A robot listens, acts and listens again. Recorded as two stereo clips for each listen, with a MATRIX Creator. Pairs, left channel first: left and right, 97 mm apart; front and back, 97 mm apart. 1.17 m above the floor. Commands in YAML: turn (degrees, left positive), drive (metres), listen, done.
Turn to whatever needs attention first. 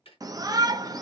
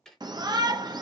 turn: -140
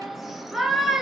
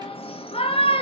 done: "Found it: a shout, straight ahead."